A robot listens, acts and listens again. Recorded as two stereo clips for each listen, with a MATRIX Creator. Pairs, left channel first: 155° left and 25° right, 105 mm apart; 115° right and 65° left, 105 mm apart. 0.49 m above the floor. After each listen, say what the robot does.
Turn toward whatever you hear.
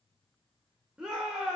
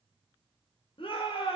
Turn 105° right.
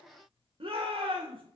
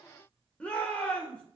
Turn 35° right.
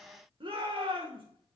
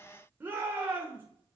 Found it: a shout, straight ahead.